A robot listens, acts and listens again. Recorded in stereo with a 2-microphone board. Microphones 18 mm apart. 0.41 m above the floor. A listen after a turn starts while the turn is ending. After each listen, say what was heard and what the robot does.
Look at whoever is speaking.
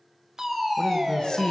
The man speaking: about 55° left or 125° left. Turn 55° left.
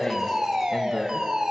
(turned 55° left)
Keep listening.
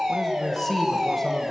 So it is at 25° left. Turn 25° left.
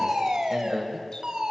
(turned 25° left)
The man speaking is now 15° right. Turn 15° right.
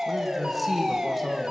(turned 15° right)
Found it: a man speaking, straight ahead.